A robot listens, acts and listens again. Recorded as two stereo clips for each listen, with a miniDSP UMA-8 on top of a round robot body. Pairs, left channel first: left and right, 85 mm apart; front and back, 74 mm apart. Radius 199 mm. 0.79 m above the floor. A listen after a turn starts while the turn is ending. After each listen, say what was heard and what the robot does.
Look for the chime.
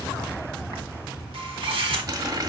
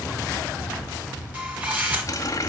Keep listening.
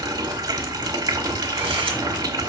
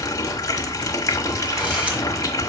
Keep listening.
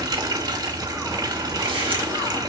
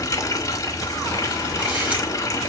I can't make out a chime to turn to.